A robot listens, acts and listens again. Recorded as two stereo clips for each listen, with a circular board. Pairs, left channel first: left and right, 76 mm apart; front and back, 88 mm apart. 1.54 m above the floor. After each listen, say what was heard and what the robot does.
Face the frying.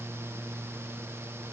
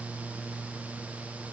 Keep listening.
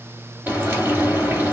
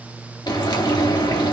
The frying: 30° right. Turn 30° right.
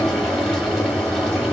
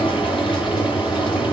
Found it: frying, straight ahead, 2 to 4 m away.